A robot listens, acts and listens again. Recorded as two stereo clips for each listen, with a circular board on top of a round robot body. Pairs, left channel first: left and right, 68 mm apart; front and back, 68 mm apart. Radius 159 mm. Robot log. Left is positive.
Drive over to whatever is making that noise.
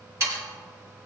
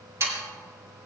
note: The sawing: 135° right.
cmd yaw -135
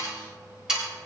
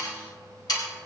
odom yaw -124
note: The sawing is now 10° right.
cmd yaw -10
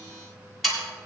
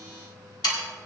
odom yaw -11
cmd fwd 1.0
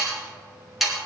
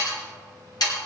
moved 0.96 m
cmd fwd 1.0
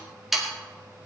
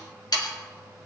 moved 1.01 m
cmd fwd 1.0
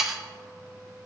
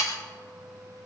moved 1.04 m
cmd fwd 1.0
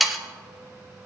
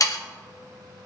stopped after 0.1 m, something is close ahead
end: I am next to the sawing.